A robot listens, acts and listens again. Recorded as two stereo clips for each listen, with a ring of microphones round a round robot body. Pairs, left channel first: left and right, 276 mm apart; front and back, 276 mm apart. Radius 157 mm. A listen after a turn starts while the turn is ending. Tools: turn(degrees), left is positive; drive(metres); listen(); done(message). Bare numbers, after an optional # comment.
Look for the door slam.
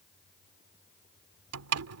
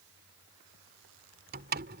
# The door slam: 120° right.
turn(-120)
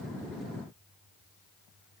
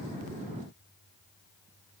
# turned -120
done("Facing where the door slam came from. I can't hear it now.")